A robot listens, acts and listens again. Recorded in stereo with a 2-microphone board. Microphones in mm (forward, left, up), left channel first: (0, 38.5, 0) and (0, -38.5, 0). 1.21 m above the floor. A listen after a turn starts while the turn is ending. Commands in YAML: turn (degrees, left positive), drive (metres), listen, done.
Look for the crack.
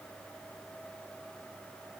listen: true
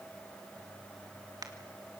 turn: -55
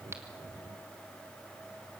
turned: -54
listen: true
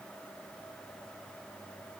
done: "I heard a crack, but can't make it out now. It was about straight ahead or 70° right."